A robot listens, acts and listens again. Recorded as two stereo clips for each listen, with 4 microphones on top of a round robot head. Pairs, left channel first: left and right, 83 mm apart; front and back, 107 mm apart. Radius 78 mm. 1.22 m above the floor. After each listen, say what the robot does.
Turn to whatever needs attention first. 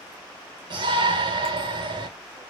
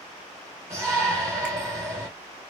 Turn 115° right.
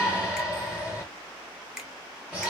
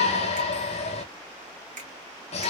Turn 15° right.
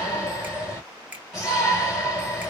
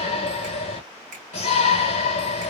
Found it: a shout, straight ahead, 1 to 2 m away.